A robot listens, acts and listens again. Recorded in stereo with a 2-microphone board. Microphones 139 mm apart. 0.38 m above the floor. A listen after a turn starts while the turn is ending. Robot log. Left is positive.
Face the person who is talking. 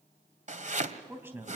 note: The man speaking: about 15° right or 165° right.
cmd yaw -15
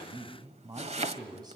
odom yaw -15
note: So it is at 150° right.
cmd yaw -150
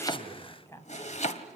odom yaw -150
note: The man speaking is now 20° left.
cmd yaw +20
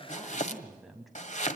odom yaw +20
end: Found it: a man speaking, straight ahead.